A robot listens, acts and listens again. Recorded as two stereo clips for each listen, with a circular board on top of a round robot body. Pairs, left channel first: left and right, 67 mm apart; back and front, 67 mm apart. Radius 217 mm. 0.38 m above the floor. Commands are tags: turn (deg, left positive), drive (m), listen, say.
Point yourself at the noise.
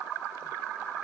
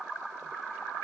<listen/>
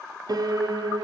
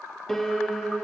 <turn deg="-95"/>
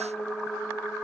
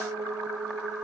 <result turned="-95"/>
<turn deg="10"/>
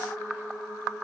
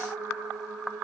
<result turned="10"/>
<say>Found it: a piano, straight ahead, 2 to 4 m away.</say>